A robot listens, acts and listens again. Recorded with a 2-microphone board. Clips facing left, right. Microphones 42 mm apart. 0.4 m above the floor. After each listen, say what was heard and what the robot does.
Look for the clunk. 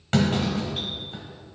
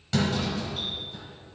The clunk: about 45° left or 135° left. Turn 45° left.
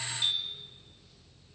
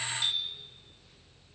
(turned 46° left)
Keep listening.
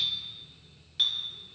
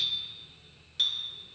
I heard a clunk, but can't make it out now. It was about straight ahead or 90° left.